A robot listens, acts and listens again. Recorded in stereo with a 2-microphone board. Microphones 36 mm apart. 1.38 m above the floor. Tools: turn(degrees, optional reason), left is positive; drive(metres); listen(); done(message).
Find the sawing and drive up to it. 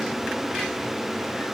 listen()
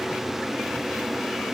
listen()
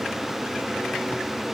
done("I can't make out sawing.")